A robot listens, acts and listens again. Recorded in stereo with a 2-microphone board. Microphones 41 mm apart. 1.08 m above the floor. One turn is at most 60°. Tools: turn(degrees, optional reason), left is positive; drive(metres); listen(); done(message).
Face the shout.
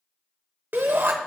turn(degrees=-60, reason="The shout: about 60° right or 120° right.")
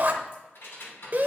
turn(degrees=-55, reason="So it is at 55° right.")
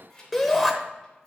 done("Facing the shout, under 1 m away.")